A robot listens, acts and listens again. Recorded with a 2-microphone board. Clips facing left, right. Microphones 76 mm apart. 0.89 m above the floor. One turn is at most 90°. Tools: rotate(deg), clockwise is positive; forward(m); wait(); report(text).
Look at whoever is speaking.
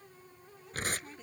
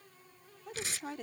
rotate(65)
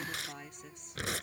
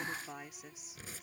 report("Facing the woman speaking.")